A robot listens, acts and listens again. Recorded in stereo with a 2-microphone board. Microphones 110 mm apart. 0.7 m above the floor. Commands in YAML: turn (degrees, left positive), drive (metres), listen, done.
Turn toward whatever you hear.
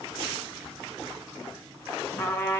turn: 20
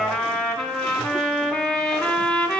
done: "Facing the trumpet, 1 to 2 m away."